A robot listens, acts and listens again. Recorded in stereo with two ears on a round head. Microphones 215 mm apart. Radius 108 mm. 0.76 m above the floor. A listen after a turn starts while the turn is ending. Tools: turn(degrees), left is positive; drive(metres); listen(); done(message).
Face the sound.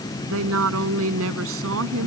turn(degrees=-65)
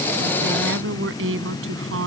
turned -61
turn(degrees=-60)
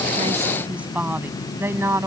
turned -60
turn(degrees=-10)
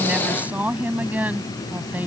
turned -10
done("Found it: a woman speaking, straight ahead.")